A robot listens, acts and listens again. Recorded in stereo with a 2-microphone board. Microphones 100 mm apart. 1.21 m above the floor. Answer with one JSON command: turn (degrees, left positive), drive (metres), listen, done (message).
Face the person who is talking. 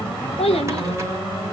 {"turn": 90}
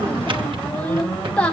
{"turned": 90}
{"turn": 10}
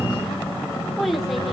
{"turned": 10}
{"done": "Facing the child speaking."}